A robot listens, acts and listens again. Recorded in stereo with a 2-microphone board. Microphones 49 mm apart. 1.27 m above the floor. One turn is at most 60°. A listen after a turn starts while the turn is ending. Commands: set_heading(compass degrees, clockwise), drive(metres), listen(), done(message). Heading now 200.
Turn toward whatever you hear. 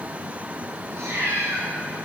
set_heading(260)
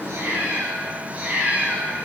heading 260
set_heading(285)
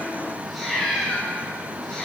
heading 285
done("Found it: a cat meowing, straight ahead.")